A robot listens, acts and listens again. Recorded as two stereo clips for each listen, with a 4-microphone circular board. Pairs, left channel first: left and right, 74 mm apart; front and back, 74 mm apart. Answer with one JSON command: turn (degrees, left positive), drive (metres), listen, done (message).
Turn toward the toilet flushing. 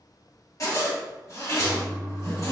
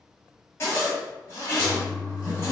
{"turn": 85}
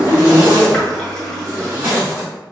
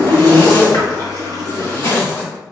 {"done": "Found it: a toilet flushing, straight ahead, 1 to 2 m away."}